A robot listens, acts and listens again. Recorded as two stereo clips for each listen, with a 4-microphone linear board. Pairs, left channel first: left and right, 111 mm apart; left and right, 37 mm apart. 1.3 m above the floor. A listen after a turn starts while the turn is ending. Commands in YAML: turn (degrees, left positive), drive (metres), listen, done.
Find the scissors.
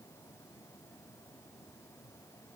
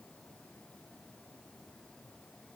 listen: true
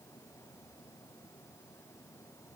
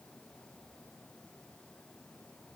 listen: true
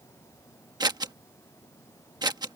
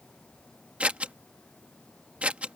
turn: -40
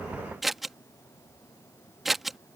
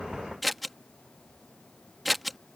done: "Found it: scissors, straight ahead."